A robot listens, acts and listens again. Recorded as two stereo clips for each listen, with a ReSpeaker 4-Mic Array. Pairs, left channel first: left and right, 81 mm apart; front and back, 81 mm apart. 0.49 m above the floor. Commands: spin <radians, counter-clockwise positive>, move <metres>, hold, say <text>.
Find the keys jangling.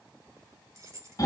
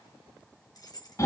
spin -0.61
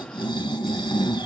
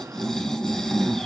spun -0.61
hold
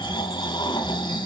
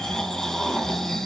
hold
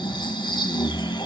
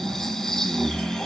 say Facing where the keys jangling came from. I can't hear it now.